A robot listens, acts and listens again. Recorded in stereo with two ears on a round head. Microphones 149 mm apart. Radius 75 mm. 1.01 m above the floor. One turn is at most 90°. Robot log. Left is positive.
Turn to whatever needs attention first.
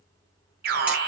note: The alarm: about 55° right or 125° right.
cmd yaw -55
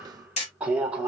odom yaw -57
note: So it is at 10° right.
cmd yaw -10
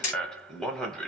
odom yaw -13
end: Facing the alarm.